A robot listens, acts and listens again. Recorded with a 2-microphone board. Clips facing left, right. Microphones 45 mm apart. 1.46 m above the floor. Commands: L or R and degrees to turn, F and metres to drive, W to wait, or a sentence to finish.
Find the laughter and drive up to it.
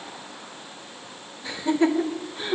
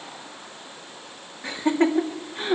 R60
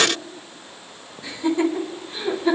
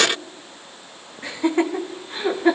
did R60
R55
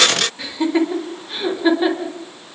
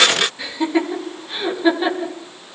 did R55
F1.0
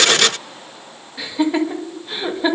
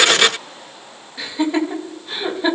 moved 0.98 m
F1.0
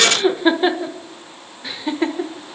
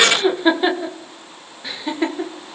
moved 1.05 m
F1.0
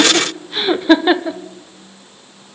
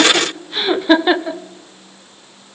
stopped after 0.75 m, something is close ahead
Arrived at the laughter, straight ahead.